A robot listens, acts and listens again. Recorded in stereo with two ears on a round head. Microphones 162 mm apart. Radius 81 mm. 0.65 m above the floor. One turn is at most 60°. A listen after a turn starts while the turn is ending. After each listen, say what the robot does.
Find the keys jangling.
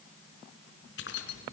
Turn 60° left.
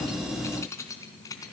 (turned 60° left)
Turn 20° left.
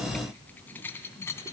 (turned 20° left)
Turn 15° left.
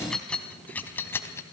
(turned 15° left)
Turn 15° left.
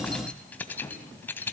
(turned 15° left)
Turn 10° left.
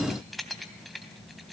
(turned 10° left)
Found it: keys jangling, straight ahead.